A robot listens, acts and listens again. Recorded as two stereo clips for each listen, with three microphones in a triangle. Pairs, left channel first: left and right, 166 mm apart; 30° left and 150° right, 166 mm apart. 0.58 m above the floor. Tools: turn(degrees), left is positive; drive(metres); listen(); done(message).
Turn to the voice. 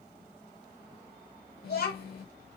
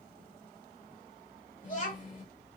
turn(degrees=65)
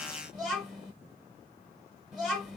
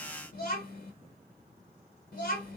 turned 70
done("Facing the child speaking.")